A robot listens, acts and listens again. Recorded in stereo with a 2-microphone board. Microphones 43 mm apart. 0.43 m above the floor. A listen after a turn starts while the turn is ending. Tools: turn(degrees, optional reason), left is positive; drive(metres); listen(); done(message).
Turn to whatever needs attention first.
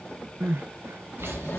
turn(degrees=-70, reason="The crying: about 70° right or 110° right.")
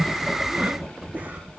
listen()
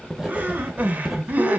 turn(degrees=-35, reason="So it is at 35° right.")
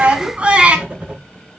turn(degrees=-25, reason="The crying is now 25° right.")
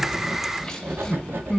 turn(degrees=15, reason="The crying is now 15° left.")
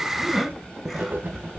done("Found it: crying, straight ahead.")